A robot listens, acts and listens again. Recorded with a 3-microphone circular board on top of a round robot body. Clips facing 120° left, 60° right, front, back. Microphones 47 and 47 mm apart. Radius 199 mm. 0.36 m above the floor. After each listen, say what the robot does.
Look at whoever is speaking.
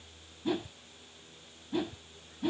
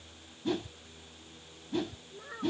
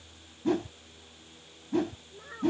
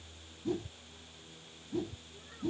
Turn 45° right.
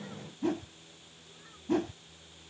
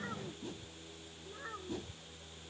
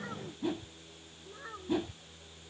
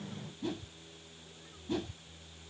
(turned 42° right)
Turn 10° right.
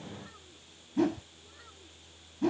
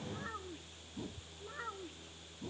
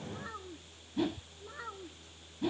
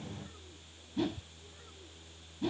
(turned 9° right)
Turn 10° right.
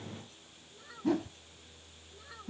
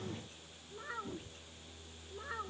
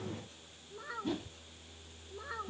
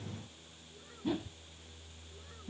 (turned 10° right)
Facing the child speaking.